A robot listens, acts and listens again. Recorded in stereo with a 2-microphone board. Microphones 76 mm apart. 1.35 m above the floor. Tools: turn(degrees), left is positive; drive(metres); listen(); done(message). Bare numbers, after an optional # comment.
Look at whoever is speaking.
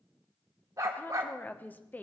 # The woman speaking: about 25° left or 155° left.
turn(25)
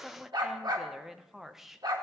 done("Facing the woman speaking.")